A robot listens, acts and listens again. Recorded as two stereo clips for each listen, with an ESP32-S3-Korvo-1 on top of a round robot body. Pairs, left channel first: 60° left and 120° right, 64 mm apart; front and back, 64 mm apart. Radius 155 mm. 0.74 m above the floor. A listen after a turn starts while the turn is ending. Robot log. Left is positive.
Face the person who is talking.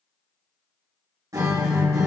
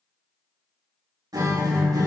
cmd idle
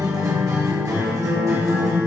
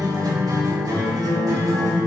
cmd idle
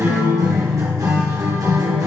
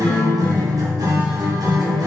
end: I can't make out anyone speaking, only a guitar.